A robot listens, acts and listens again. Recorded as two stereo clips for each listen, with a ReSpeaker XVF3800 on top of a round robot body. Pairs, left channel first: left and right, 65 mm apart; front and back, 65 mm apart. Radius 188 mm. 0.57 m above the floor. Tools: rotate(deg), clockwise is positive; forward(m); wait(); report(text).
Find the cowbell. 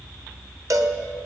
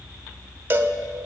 rotate(120)
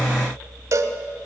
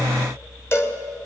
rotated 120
rotate(50)
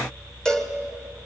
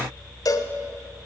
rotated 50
rotate(-10)
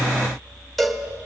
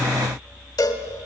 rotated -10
report("Found it: a cowbell, straight ahead.")